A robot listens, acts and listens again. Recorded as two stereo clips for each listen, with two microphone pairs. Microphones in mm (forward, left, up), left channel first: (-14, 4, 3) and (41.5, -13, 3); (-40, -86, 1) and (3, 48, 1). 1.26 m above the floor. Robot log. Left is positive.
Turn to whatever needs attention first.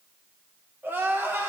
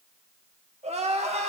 note: The crying: 35° left.
cmd yaw +35
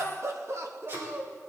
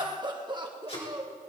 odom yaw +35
note: The crying is now 15° left.
cmd yaw +15
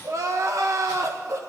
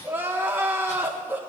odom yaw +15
end: Facing the crying, 1 to 2 m away.